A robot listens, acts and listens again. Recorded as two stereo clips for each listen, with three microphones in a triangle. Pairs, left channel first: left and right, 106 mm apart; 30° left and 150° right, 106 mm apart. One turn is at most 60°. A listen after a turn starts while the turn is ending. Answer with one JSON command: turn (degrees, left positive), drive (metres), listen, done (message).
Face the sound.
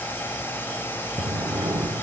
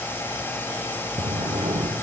{"turn": -60}
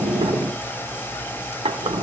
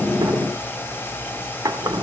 {"turn": -60}
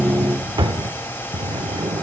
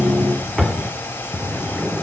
{"turn": -60}
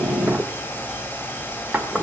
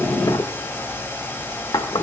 {"turn": -15}
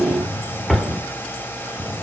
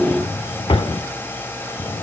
{"done": "Facing the drawer."}